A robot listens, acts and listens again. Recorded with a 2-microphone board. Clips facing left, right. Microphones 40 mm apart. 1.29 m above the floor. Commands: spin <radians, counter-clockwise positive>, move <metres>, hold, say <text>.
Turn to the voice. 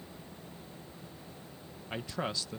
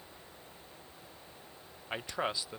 spin -0.35
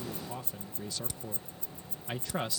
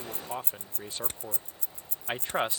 spin -2.44
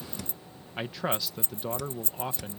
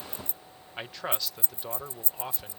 say Found it: a man speaking, straight ahead.